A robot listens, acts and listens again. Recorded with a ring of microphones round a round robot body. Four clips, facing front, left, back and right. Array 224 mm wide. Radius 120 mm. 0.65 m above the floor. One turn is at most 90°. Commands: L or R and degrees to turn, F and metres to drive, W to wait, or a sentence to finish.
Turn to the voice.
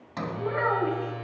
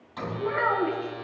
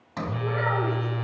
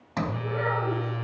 L75
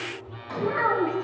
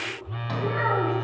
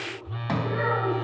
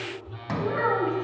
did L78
Facing the child speaking, over 4 m away.